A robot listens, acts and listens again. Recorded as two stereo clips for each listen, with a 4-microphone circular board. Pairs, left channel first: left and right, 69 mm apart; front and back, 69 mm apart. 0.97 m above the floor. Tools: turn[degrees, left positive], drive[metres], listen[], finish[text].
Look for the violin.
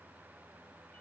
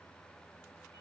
Action: listen[]
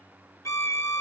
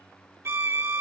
Thought: The violin: 130° left.
Action: turn[130]
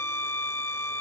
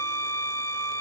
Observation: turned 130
Thought: The violin is now 40° left.
Action: turn[40]
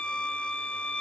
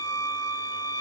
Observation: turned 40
Thought: The violin is now 15° left.
Action: turn[15]
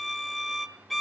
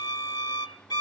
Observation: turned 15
Action: finish[Found it: a violin, straight ahead.]